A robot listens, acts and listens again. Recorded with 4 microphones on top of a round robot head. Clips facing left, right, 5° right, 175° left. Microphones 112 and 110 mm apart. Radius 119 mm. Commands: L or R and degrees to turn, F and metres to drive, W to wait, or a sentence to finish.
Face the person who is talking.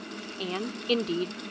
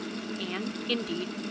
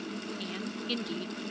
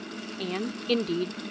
L145
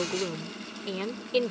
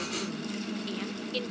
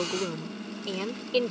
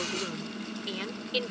L40
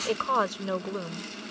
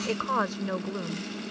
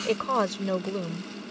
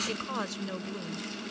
L10
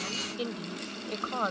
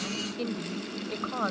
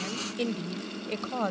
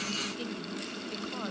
Found it: a woman speaking, straight ahead.